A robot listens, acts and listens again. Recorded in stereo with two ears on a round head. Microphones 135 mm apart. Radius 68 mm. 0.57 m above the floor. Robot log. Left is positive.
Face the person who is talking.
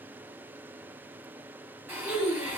note: The child speaking: about 65° left or 115° left.
cmd yaw +65
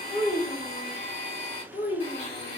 note: So it is at 50° left.
cmd yaw +50
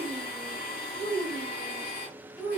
note: The child speaking is now 15° left.
cmd yaw +15
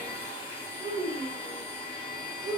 end: Facing the child speaking.